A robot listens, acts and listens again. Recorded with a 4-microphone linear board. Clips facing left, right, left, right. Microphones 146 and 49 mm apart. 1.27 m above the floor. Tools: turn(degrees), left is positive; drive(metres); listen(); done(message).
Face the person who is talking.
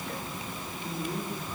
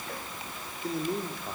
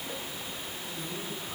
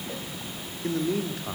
turn(degrees=-75)
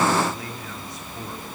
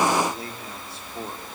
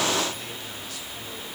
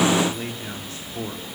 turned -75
turn(degrees=-30)
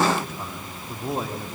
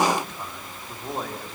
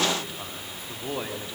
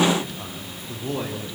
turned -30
done("Found it: a man speaking, straight ahead.")